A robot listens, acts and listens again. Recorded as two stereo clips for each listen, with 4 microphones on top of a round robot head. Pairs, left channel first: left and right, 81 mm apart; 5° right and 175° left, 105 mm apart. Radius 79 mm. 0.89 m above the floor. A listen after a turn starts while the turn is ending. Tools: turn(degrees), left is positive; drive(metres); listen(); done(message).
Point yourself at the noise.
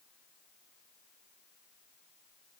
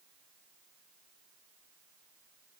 listen()
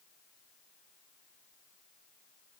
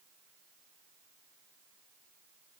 listen()
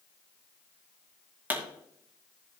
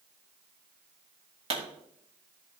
turn(degrees=-155)
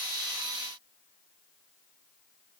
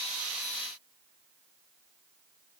done("Facing where the pop came from. I can't hear it now.")